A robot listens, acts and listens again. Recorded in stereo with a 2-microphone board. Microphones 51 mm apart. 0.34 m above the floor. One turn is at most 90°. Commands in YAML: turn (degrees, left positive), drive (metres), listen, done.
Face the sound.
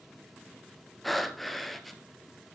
turn: 30
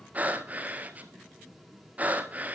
turn: -30
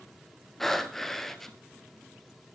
done: "Facing the breathing, 1 to 2 m away."